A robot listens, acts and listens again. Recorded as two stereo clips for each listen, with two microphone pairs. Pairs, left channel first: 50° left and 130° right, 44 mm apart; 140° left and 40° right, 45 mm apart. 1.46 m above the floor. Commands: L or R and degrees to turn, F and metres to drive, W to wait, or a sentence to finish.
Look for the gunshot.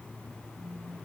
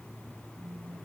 W
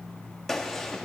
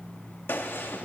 L135
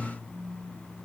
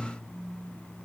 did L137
I heard a gunshot from this way, but can't make it out now.